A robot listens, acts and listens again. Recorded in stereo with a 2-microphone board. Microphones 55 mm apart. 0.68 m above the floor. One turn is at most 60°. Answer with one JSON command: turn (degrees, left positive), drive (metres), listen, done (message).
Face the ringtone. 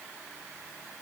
{"listen": true}
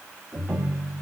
{"turn": -30}
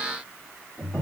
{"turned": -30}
{"turn": 10}
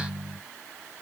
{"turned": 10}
{"done": "Found it: a ringtone, straight ahead."}